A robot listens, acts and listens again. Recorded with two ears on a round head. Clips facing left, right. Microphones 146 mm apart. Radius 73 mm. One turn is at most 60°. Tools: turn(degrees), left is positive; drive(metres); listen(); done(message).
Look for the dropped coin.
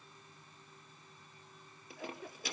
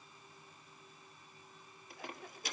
turn(degrees=60)
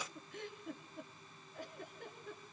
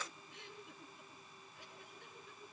listen()
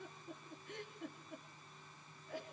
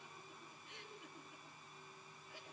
done("I heard a dropped coin, but can't make it out now. It was about 10° left or 50° left.")